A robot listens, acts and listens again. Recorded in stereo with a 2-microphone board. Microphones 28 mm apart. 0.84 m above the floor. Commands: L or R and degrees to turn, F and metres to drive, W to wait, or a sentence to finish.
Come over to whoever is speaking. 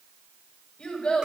L60
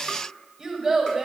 F1.0
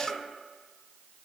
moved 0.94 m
W
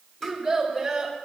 F1.0
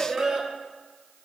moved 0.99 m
F1.0
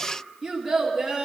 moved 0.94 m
F1.0
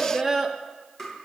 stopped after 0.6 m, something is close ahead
I am next to the child speaking.